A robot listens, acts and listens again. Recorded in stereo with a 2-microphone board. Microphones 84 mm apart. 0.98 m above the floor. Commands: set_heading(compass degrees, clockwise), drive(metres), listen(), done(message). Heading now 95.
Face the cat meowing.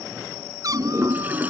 set_heading(140)
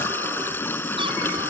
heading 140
listen()
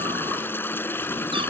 listen()
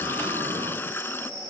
done("I heard a cat meowing, but can't make it out now. It was about straight ahead or 90° right.")